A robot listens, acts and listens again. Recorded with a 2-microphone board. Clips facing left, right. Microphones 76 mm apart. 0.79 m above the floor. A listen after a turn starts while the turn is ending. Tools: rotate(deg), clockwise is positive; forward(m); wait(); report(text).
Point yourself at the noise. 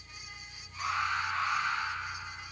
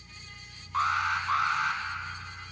rotate(90)
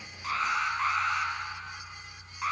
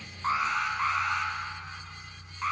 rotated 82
report("Facing the alarm, over 4 m away.")